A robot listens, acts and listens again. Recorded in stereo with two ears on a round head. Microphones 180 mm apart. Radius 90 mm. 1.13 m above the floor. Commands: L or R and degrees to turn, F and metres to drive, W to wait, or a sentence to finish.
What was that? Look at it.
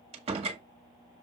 R30
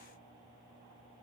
W
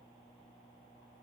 I heard a door slam, but can't make it out now. It was about straight ahead or 120° right.